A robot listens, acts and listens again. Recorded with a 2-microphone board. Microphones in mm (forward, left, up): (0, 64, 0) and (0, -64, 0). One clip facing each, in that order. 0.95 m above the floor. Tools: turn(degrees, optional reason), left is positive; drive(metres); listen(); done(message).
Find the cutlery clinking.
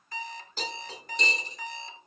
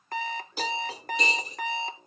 turn(degrees=-30)
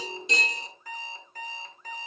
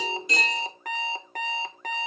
turn(degrees=20, reason="So it is at 20° left.")
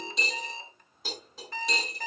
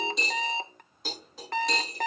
done("Facing the cutlery clinking.")